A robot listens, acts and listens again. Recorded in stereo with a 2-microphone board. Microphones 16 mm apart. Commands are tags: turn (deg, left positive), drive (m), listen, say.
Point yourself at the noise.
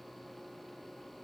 <listen/>
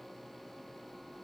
<listen/>
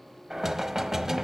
<turn deg="-25"/>
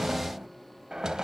<turn deg="-125"/>
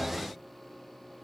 <say>Facing the knocking.</say>